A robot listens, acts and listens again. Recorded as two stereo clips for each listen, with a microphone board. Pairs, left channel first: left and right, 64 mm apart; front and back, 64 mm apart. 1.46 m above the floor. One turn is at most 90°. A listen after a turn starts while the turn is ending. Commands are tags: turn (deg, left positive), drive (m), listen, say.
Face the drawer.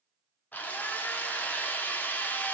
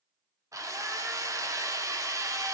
<listen/>
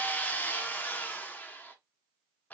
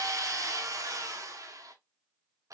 <listen/>
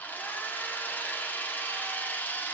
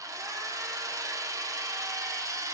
<say>I can't make out a drawer to turn to.</say>